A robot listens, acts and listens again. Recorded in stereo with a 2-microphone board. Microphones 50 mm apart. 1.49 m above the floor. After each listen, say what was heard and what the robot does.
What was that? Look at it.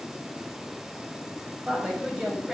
Turn 30° right.
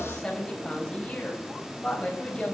So it is at 20° left. Turn 20° left.
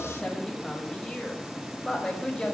The woman speaking is now 10° left. Turn 10° left.
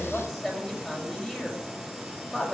Found it: a woman speaking, straight ahead, over 4 m away.